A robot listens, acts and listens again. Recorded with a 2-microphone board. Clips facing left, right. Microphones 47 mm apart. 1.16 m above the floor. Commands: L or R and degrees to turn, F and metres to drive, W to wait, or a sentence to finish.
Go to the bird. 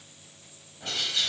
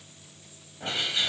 R20
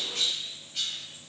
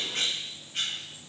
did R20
R135
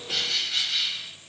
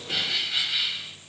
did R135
R15
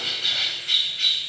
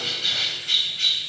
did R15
F1.0
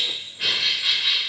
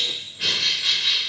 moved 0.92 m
F1.0
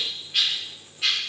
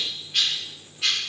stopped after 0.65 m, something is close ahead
Arrived at the bird, straight ahead.